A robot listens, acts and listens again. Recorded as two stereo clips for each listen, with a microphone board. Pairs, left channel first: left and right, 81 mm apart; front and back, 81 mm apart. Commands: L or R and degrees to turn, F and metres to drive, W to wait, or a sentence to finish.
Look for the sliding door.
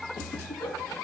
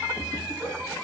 W
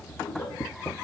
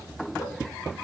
W
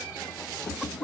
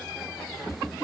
I can't make out a sliding door to turn to.